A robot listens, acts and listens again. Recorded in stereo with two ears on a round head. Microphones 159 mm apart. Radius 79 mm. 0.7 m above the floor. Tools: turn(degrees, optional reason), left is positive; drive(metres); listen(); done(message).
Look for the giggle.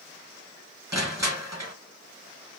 listen()
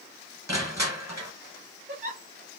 turn(degrees=-50, reason="The giggle: about 50° right or 130° right.")
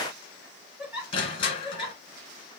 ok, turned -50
done("Found it: a giggle, straight ahead.")